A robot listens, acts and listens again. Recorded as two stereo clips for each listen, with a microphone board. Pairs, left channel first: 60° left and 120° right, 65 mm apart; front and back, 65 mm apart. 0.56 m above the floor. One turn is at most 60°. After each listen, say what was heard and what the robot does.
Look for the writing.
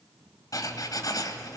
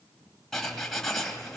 The writing: 85° left. Turn 60° left.
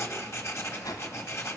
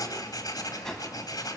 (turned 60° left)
The writing is now 15° left. Turn 15° left.
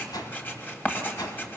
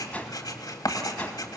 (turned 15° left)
Found it: writing, straight ahead, 2 to 4 m away.